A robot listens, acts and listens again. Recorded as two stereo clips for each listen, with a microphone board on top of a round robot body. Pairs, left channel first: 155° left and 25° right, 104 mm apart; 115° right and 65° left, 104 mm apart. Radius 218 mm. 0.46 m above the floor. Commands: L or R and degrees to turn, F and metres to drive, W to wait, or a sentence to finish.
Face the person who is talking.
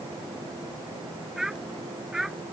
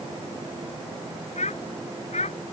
R110
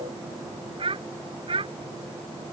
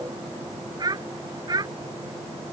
L15
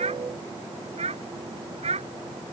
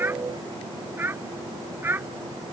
Facing the child speaking.